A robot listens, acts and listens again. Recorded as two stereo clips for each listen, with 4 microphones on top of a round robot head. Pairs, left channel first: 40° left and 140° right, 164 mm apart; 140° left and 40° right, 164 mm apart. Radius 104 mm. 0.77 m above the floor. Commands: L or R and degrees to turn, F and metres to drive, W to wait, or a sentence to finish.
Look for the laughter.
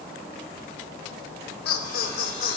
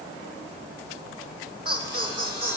L15
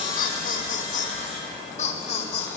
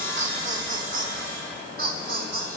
R15
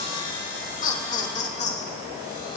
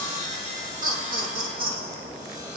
R10
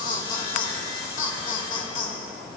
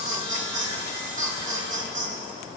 Facing the laughter, 2 to 4 m away.